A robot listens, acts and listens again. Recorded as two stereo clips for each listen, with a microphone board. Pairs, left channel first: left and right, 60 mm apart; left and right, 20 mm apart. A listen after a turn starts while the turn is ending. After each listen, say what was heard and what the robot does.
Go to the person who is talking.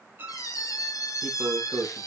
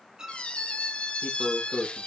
Turn 90° right.
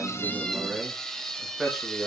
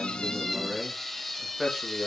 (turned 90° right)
Drive 1.0 m forward.
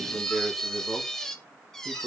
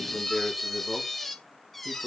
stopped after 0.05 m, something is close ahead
Blocked. The man speaking is further on, straight ahead.